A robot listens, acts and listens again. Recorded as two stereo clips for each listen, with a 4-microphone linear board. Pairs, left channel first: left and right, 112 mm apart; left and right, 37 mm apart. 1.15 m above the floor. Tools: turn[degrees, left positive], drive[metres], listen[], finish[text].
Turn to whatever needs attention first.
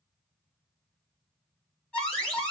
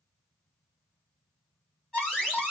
Action: turn[30]
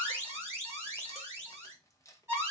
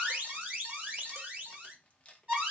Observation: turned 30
Thought: So it is at 20° right.
Action: turn[-20]
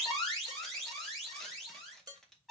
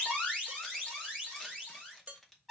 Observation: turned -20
Action: finish[Found it: an alarm, straight ahead, 2 to 4 m away.]